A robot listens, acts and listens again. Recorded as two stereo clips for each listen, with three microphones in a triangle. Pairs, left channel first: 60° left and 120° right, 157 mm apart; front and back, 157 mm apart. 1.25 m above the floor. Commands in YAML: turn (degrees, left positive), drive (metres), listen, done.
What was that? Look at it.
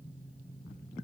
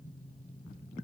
listen: true
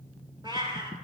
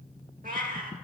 turn: -175
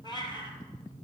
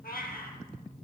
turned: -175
done: "Facing the cat meowing, 2 to 4 m away."